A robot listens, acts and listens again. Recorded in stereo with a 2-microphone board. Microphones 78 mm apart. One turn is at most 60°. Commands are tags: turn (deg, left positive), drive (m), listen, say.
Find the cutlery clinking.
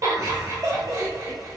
<listen/>
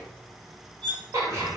<turn deg="-60"/>
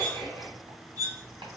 <turn deg="-50"/>
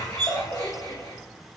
<say>Facing the cutlery clinking, 2 to 4 m away.</say>